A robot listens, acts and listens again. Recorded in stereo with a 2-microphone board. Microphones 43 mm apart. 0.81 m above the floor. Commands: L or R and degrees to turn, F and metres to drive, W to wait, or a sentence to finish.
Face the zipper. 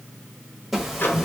R30
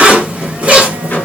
R145
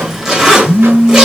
R10
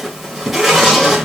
Found it: a zipper, straight ahead, 1 to 2 m away.